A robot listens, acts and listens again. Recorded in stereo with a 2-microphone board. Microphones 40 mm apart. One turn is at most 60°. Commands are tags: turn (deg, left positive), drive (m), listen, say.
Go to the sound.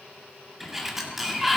<turn deg="-30"/>
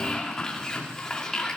<turn deg="15"/>
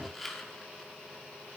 <drive m="1.0"/>
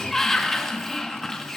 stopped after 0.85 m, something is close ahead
<turn deg="10"/>
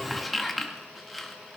<say>I am next to the sliding door.</say>